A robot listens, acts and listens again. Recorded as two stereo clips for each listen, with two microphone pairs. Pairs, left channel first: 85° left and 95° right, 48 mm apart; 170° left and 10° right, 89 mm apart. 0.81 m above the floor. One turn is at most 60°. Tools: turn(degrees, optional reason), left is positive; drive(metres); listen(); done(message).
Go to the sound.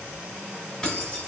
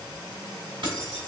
turn(degrees=10, reason="The keys jangling: 10° left.")
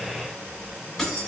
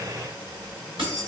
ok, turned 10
drive(metres=1.0)
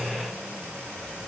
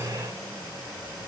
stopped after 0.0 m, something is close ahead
listen()
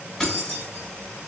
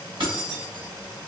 done("Blocked. The keys jangling is further on, straight ahead.")